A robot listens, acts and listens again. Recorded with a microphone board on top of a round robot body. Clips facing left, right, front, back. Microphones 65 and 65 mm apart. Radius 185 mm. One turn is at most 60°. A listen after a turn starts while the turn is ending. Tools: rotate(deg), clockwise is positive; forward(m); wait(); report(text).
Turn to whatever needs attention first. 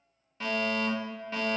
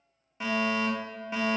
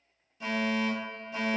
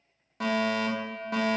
rotate(60)
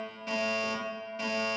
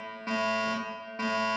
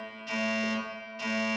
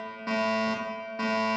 rotate(60)
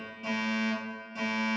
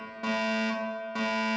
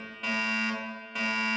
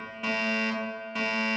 rotate(60)
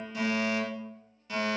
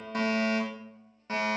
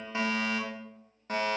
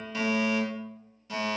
rotate(40)
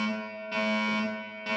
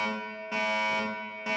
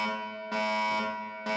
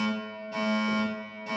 rotate(15)
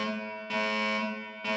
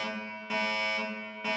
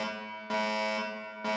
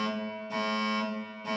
report("Found it: a fire alarm, straight ahead, 2 to 4 m away.")